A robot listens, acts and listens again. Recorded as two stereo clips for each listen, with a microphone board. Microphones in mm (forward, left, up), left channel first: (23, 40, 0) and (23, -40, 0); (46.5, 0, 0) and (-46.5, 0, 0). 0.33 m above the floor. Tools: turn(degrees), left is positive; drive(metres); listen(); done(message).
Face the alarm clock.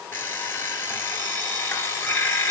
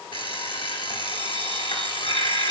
turn(degrees=30)
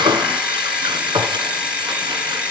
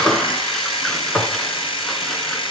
turn(degrees=-10)
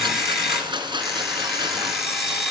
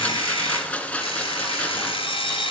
done("Found it: an alarm clock, straight ahead, 2 to 4 m away.")